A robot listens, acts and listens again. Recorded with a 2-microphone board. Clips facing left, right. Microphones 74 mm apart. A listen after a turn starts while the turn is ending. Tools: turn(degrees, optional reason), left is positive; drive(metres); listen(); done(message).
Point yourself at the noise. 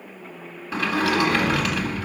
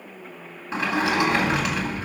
turn(degrees=-20, reason="The sliding door: about 20° right or 160° right.")
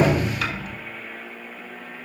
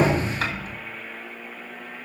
turn(degrees=-145, reason="So it is at 145° right.")
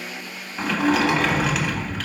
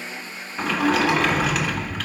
done("Found it: a sliding door, straight ahead.")